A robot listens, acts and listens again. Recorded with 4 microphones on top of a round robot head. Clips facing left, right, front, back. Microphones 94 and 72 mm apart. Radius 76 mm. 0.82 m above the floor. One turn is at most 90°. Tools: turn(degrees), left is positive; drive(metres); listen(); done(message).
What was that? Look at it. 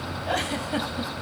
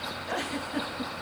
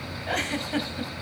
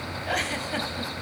turn(degrees=90)
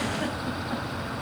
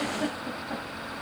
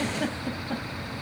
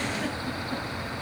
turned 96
done("Facing the giggle, 2 to 4 m away.")